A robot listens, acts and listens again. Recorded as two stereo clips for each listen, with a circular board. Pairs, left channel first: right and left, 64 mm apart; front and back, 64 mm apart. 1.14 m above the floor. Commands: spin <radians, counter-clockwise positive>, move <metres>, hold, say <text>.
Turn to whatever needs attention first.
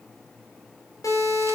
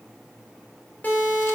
spin -1.05
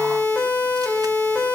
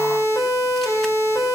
spin -0.35
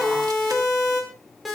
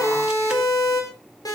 say Found it: a siren, straight ahead.